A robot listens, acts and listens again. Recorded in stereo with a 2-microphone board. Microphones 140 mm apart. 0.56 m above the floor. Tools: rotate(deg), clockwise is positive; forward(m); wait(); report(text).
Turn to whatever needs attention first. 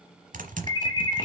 rotate(-30)
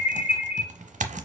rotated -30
rotate(-115)
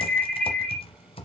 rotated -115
report("Found it: an alarm, straight ahead, 1 to 2 m away.")